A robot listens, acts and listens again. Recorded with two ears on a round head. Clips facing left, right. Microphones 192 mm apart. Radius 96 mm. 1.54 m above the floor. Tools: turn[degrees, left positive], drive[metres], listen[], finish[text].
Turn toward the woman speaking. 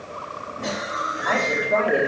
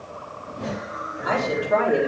Action: turn[-30]
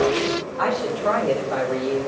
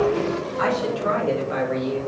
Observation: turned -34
Thought: So it is at 160° right.
Action: turn[-160]
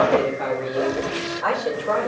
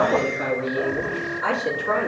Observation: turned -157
Thought: The woman speaking is now 25° right.
Action: turn[-25]
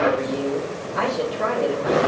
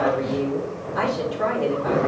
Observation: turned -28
Action: finish[Found it: a woman speaking, straight ahead.]